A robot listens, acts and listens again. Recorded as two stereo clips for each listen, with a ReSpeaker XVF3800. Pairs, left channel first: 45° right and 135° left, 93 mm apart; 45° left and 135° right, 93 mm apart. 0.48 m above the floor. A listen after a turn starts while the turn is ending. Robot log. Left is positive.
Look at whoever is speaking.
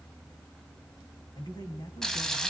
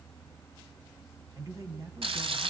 note: The man speaking: 85° right.
cmd yaw -85
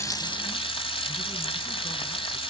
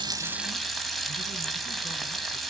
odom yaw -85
cmd idle
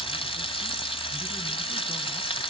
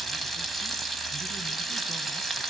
cmd idle
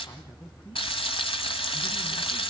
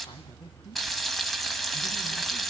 end: Found it: a man speaking, straight ahead, over 4 m away.